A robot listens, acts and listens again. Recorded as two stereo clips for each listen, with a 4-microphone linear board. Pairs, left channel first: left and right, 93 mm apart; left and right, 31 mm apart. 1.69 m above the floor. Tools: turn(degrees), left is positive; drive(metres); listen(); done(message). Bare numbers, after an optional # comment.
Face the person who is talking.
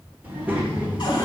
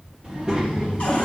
turn(-30)
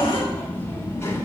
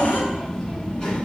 # So it is at 30° left.
turn(30)
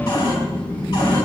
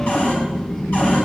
# The child speaking is now 20° left.
turn(20)
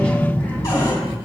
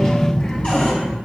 # The child speaking is now 20° left.
turn(20)
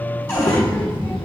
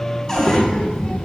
# The child speaking is now 30° left.
turn(30)
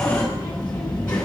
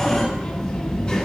# The child speaking is now 10° left.
turn(10)
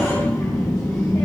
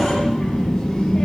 done("Found it: a child speaking, straight ahead.")